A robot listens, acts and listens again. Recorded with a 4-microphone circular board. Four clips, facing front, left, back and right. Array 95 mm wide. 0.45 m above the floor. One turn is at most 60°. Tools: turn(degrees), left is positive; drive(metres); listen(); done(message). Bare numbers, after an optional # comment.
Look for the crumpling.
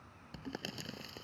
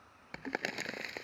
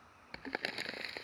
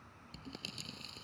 # The crumpling: 115° left.
turn(60)
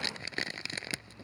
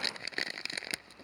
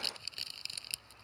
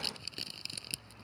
# The crumpling is now 45° left.
turn(45)
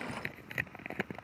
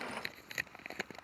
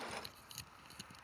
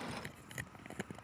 # The crumpling is now 15° left.
turn(15)
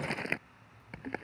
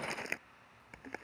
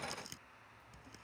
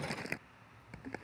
done("Found it: crumpling, straight ahead.")